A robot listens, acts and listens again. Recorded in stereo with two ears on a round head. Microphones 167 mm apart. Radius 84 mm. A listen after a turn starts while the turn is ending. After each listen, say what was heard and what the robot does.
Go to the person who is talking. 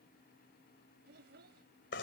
The child speaking: about 60° right or 120° right. Turn 60° right.
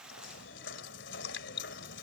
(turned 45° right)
Keep listening.
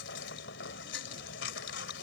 Keep listening.
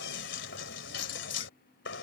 I heard a child speaking, but can't make it out now. It was about 15° right or 75° right. I did not reach it.